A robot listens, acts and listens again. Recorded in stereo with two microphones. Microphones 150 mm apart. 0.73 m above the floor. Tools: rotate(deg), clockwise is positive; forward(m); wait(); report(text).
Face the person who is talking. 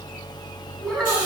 rotate(-30)
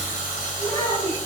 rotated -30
rotate(-155)
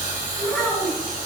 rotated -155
report("Facing the child speaking, 2 to 4 m away.")